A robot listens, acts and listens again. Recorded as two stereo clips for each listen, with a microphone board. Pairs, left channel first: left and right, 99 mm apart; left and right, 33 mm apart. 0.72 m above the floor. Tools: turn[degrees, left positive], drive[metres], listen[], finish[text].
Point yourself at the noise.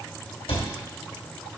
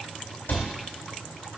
Action: turn[90]
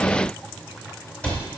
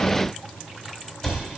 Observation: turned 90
Thought: So it is at 10° left.
Action: turn[10]
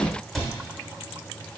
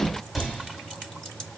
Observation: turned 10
Action: finish[Found it: a cupboard door, straight ahead, 1 to 2 m away.]